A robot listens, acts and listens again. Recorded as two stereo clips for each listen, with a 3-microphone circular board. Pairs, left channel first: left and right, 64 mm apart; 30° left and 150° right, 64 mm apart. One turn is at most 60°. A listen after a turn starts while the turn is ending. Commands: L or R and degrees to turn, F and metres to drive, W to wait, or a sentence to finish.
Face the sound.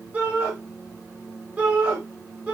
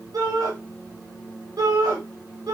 R60
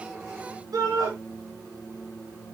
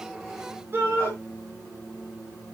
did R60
R60
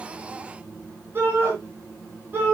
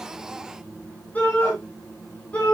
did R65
R30
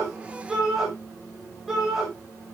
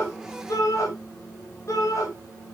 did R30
Found it: a shout, straight ahead.